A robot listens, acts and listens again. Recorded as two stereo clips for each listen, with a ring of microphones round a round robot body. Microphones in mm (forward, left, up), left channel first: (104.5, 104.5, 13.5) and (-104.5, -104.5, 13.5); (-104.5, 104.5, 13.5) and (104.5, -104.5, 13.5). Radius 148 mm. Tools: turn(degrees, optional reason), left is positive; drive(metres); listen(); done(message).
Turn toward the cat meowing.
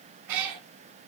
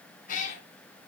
turn(degrees=-160, reason="The cat meowing: 160° right.")
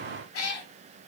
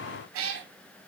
done("Facing the cat meowing.")